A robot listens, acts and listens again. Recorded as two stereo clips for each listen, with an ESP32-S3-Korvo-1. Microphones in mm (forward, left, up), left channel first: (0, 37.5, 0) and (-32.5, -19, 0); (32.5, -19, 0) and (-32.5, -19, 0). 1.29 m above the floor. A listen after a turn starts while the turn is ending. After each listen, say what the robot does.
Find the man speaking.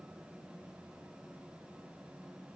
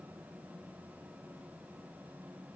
Keep listening.
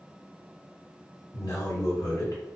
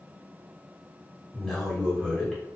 Turn 85° left.
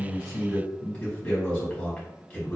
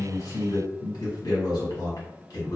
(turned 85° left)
Found it: a man speaking, straight ahead.